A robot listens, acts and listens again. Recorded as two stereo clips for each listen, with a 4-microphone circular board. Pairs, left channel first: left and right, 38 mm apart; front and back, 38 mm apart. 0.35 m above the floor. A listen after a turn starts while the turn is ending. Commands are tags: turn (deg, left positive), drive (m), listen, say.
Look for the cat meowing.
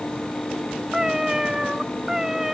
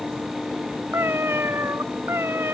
<turn deg="-170"/>
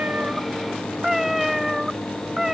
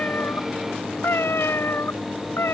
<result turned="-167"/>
<turn deg="-10"/>
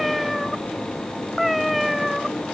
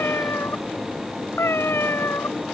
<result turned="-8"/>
<say>Found it: a cat meowing, straight ahead.</say>